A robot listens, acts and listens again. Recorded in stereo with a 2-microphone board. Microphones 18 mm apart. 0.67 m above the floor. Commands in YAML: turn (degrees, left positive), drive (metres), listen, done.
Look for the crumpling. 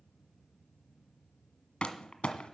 turn: 70
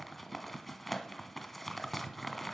done: "Facing the crumpling."